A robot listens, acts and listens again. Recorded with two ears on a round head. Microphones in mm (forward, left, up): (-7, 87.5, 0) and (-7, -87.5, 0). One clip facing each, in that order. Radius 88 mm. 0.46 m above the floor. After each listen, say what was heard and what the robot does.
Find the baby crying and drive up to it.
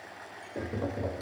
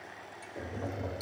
Keep listening.
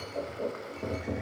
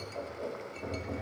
Keep listening.
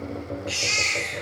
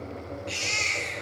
Turn 30° left.
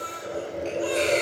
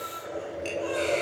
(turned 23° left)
So it is at 155° left. Turn 155° left.
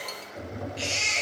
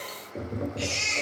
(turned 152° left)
Drive 1.0 m forward.
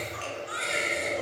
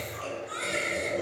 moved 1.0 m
Drive 1.0 m forward.
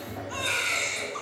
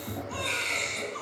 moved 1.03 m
Drive 1.0 m forward.
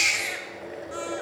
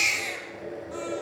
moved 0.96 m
Drive 1.0 m forward.
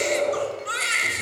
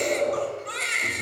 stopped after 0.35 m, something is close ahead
I am next to the baby crying.